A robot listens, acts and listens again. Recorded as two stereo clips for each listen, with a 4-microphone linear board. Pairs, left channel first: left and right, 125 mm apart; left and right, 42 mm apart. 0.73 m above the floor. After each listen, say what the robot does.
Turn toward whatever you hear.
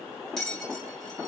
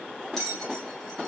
Turn 30° left.
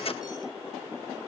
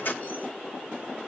Keep listening.
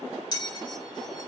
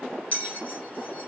Turn 145° left.
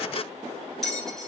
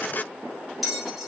Facing the bell.